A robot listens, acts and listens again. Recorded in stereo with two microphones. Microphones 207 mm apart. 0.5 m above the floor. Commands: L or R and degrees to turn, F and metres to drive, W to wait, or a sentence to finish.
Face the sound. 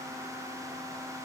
W
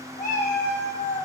L55
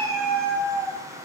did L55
L20
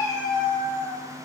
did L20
L25
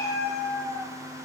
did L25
L20
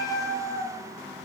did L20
Found it: a cat meowing, straight ahead, 2 to 4 m away.